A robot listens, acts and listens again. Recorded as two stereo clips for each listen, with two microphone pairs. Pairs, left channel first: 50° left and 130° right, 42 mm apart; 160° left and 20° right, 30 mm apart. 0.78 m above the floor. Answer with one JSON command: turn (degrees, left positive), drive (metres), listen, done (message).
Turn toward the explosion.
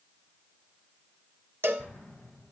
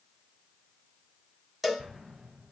{"done": "Found it: an explosion, straight ahead."}